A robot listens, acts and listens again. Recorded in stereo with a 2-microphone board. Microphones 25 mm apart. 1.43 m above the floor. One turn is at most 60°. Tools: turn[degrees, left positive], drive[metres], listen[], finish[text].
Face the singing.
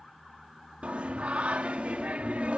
Thought: The singing: about 70° right or 110° right.
Action: turn[-60]
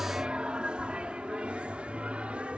Thought: So it is at 60° right.
Action: turn[-60]
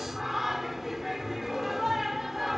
Action: finish[Found it: singing, straight ahead.]